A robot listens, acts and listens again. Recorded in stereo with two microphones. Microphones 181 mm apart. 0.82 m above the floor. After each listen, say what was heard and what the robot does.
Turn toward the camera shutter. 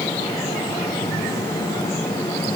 Keep listening.
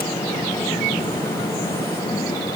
Keep listening.
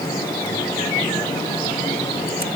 I can't make out a camera shutter to turn to.